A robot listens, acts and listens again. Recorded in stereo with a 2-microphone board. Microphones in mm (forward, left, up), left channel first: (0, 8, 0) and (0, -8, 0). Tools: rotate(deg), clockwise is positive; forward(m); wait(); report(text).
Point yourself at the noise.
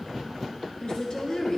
rotate(-50)
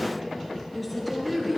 report("Found it: a woman speaking, straight ahead.")